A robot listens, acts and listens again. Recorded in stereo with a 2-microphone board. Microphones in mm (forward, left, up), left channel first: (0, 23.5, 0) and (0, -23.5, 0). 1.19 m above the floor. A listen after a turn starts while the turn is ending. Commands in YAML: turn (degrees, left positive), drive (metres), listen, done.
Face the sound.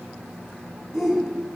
turn: 30
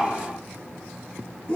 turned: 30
turn: 150
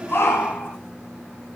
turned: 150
turn: 40
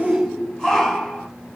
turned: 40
done: "Found it: a shout, straight ahead."